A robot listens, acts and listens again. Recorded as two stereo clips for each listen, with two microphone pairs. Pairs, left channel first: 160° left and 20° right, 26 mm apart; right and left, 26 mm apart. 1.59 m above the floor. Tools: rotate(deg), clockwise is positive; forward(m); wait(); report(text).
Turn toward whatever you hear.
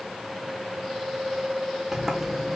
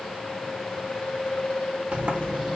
rotate(-55)
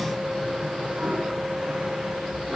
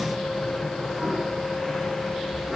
report("Found it: a sliding door, straight ahead, 1 to 2 m away.")